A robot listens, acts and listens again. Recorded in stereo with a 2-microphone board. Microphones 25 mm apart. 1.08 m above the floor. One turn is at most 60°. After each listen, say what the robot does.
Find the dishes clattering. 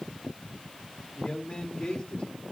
Keep listening.
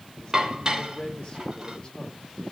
Turn 30° right.
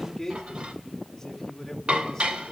Turn 60° right.
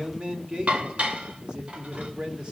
Turn 60° right.
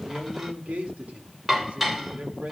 Turn 10° right.
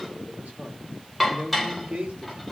Found it: dishes clattering, straight ahead, 2 to 4 m away.